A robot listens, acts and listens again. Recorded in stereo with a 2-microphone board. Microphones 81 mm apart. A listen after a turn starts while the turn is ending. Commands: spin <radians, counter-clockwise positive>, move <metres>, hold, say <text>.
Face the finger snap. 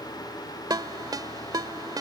hold
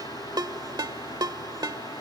hold
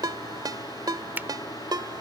spin -0.44
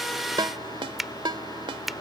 say Found it: a finger snap, straight ahead.